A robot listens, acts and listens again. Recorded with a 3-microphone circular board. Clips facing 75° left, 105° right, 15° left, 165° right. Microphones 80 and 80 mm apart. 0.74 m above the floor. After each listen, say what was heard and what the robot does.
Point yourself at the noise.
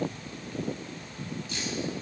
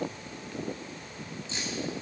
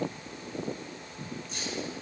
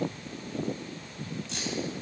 The keys jangling: 170° right. Turn 170° right.
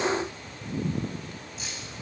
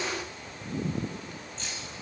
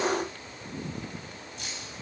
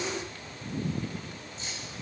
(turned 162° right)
Found it: keys jangling, straight ahead.